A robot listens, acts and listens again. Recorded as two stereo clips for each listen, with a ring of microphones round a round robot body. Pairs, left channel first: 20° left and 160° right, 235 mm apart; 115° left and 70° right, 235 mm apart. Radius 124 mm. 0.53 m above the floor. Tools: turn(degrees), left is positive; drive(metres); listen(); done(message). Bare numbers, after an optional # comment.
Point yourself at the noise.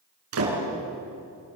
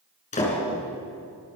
# The door slam: 175° left.
turn(175)
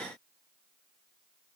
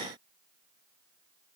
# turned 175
done("I heard a door slam from this way, but can't make it out now.")